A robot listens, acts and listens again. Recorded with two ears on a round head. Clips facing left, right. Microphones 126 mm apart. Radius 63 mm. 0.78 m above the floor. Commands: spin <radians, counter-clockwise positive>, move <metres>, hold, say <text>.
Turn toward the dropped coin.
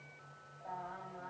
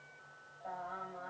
hold
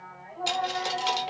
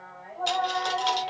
spin 0.52
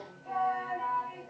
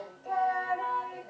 hold
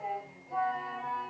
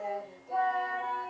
say I heard a dropped coin, but can't make it out now. It was about 20° right or 140° left.